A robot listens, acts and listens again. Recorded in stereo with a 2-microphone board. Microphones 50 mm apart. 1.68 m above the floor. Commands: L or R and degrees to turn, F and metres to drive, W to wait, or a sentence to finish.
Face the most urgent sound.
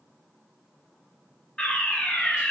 L25
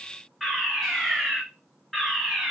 Found it: a fire alarm, straight ahead.